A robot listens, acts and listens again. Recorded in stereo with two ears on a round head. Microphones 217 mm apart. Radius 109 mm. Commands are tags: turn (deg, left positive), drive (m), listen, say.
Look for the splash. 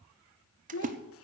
<turn deg="-35"/>
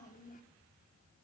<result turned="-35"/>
<listen/>
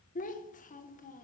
<say>I heard a splash, but can't make it out now. It was about straight ahead or 110° right.</say>